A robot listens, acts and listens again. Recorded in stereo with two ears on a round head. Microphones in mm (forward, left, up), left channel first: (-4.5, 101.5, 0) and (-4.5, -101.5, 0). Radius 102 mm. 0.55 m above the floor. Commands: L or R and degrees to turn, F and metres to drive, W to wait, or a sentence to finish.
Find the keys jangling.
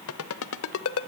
W
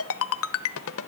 W
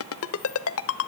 I can't make out keys jangling, only a ringtone.